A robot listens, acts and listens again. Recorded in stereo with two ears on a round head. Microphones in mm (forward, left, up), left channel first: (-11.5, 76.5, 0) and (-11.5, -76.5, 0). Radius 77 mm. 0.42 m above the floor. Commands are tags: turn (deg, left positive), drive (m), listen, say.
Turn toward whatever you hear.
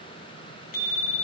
<turn deg="55"/>
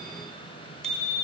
<say>Found it: a bicycle bell, straight ahead.</say>